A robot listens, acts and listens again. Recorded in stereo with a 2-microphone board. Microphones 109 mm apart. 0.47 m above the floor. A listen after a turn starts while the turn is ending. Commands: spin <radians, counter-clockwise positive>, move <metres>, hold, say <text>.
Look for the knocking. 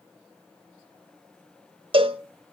hold
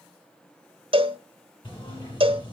spin 0.87
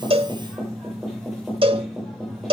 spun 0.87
say Facing the knocking, over 4 m away.